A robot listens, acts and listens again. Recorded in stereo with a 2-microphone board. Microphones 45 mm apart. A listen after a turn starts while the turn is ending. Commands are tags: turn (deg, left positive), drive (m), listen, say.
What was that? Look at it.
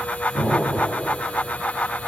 <turn deg="-65"/>
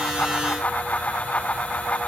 <listen/>
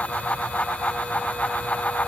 <say>I heard an explosion, but can't make it out now. It was about straight ahead or 50° right.</say>